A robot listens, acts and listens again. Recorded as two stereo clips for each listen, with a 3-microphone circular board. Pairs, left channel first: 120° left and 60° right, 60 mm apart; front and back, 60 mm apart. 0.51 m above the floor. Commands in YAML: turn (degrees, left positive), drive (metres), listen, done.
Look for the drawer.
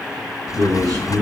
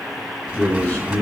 turn: 110
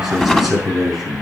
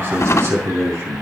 turn: 35
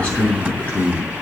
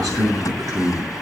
done: "Found it: a drawer, straight ahead, 1 to 2 m away."